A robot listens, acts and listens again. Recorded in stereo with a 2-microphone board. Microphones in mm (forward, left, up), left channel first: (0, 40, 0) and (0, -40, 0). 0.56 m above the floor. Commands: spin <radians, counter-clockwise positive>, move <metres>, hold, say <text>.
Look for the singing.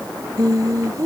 spin -0.87
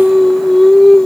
say Found it: singing, straight ahead.